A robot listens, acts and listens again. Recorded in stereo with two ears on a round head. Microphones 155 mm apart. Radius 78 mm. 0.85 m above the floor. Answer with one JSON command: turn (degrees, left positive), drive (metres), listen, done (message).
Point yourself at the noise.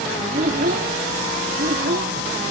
{"turn": -55}
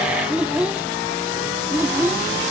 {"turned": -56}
{"turn": -15}
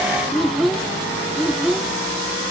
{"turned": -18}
{"done": "Found it: a child speaking, straight ahead."}